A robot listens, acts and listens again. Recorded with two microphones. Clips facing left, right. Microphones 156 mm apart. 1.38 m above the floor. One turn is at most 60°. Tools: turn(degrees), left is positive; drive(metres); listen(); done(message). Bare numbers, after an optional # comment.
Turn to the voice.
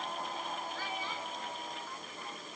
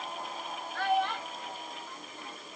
# The child speaking: about 70° right or 110° right.
turn(-60)
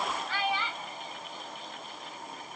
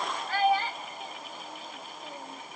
# So it is at 45° right.
turn(-45)
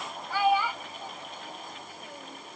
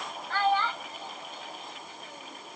# The child speaking is now 10° left.
turn(10)
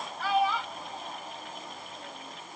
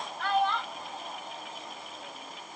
done("Found it: a child speaking, straight ahead.")